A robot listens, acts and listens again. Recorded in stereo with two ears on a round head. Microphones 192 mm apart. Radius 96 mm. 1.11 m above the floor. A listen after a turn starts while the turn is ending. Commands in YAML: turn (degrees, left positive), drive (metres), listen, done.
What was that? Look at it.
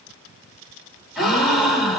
turn: 30
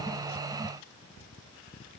listen: true
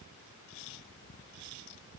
done: "I heard a gasp, but can't make it out now. It was about 30° right or 150° left."